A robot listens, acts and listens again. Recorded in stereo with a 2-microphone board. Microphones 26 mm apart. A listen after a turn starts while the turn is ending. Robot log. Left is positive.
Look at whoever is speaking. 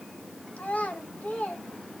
cmd yaw +90
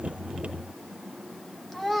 end: Facing the child speaking, 1 to 2 m away.